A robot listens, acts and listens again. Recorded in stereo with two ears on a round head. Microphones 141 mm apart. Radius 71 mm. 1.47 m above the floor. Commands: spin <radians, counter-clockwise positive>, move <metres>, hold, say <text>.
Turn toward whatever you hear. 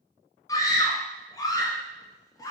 spin 0.35
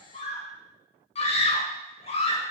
spin 2.36
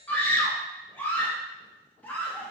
spin 0.17
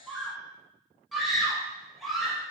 say Found it: a scream, straight ahead.